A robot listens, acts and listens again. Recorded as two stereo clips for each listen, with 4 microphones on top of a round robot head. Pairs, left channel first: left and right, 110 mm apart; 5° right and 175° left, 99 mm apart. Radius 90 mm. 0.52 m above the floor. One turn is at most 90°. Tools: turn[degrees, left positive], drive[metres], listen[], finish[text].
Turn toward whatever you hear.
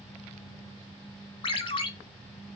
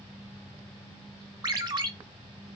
Thought: The ringtone: 130° left.
Action: turn[90]
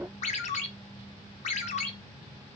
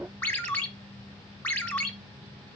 Thought: The ringtone is now 70° left.
Action: turn[70]
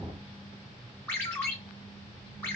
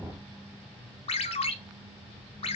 Thought: The ringtone is now 15° left.
Action: turn[15]
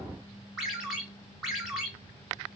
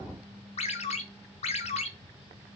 Action: finish[Facing the ringtone.]